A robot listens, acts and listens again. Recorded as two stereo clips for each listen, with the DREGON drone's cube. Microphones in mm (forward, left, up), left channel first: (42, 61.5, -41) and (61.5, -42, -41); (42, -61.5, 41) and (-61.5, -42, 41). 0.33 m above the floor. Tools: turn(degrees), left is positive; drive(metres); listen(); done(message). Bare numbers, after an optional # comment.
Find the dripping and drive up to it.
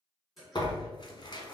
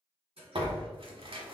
# The dripping: 170° right.
turn(-170)
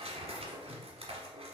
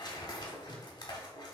drive(1.0)
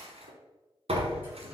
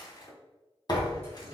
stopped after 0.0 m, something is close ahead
listen()
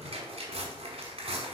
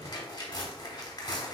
listen()
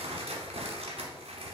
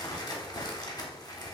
done("Facing where the dripping came from. I can't hear it now. I did not reach it.")